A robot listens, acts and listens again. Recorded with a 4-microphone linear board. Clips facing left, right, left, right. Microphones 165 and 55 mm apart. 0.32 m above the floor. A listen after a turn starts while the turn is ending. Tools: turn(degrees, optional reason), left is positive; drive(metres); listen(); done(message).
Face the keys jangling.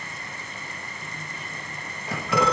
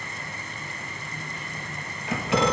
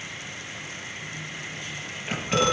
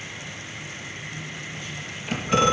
turn(degrees=30, reason="The keys jangling: about 30° left or 150° left.")
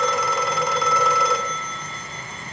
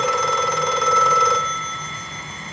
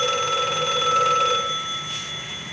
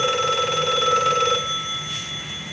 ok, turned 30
listen()
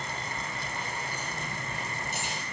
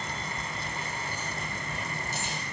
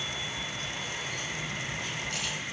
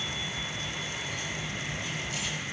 turn(degrees=110, reason="So it is at 110° left.")
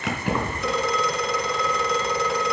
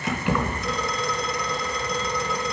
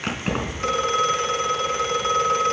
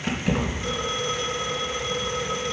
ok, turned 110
done("Facing the keys jangling.")